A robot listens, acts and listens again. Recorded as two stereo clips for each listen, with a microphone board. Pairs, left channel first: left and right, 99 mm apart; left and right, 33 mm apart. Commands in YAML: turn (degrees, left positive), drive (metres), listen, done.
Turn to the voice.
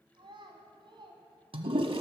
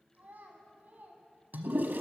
turn: -55
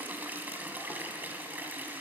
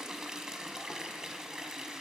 listen: true
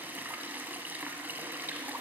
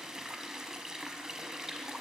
listen: true
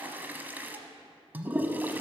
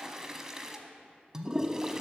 done: "I heard a child speaking, but can't make it out now. It was about straight ahead or 70° right."